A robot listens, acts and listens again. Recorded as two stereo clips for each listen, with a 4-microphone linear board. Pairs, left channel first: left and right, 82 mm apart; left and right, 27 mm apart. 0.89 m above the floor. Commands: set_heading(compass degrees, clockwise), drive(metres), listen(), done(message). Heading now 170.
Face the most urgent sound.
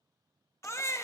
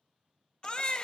set_heading(135)
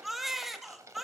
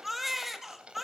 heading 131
done("Facing the baby crying, 1 to 2 m away.")